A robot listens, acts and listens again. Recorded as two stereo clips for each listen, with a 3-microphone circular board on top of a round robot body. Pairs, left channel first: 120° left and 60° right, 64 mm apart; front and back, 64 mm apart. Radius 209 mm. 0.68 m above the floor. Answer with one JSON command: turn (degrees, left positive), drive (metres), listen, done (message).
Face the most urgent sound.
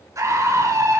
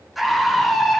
{"turn": -90}
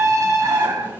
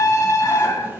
{"turn": -30}
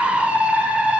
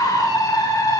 {"turn": 10}
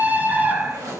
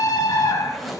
{"done": "Facing the scream."}